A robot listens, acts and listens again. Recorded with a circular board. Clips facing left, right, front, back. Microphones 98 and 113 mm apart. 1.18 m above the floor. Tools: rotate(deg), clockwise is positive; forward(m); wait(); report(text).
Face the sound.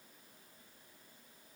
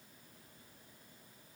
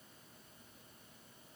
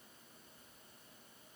wait()
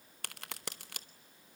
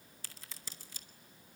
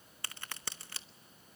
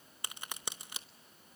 rotate(-105)
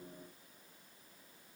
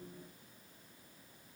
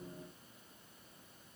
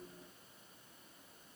report("Facing where the crack came from. I can't hear it now.")